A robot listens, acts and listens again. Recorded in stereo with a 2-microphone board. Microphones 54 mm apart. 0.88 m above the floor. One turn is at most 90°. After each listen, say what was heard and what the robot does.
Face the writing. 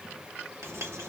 The writing: about 65° right or 115° right. Turn 65° right.
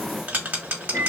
So it is at 35° right. Turn 35° right.
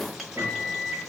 Found it: writing, straight ahead.